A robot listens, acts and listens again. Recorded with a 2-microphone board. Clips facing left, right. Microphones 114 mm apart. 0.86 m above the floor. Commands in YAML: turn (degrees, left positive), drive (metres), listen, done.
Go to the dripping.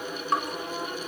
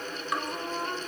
turn: 35
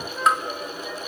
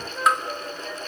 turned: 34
drive: 1.0
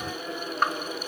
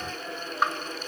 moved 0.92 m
drive: 1.0
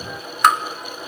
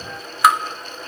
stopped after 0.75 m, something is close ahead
done: "Arrived at the dripping, straight ahead."